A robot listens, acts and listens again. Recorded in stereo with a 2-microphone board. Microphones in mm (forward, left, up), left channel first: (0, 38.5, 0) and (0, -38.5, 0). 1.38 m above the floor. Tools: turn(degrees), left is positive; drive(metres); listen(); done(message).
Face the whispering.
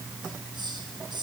listen()
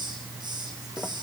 listen()
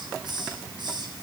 done("I can't make out whispering to turn to.")